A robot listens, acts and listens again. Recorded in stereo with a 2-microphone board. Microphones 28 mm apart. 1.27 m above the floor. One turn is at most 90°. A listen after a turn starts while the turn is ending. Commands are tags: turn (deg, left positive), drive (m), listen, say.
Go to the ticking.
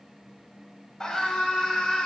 <listen/>
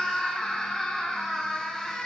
<listen/>
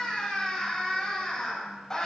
<say>I can't make out ticking, only a scream.</say>